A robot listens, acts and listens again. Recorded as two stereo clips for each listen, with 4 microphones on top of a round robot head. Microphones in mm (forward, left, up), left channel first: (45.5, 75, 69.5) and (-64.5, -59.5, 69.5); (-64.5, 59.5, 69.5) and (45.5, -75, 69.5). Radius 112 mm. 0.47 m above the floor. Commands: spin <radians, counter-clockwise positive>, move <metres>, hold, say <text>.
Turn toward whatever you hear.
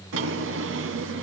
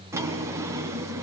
spin -2.18
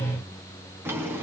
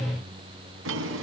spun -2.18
spin -0.87
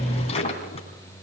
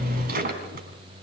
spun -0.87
spin -0.17
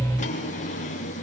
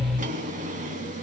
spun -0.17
say Facing the drawer, 2 to 4 m away.